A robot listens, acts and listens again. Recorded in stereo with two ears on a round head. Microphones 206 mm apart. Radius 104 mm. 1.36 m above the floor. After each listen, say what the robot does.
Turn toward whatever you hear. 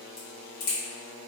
Turn 40° left.
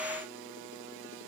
Keep listening.
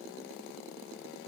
I heard a crack, but can't make it out now. It was about straight ahead or 100° left.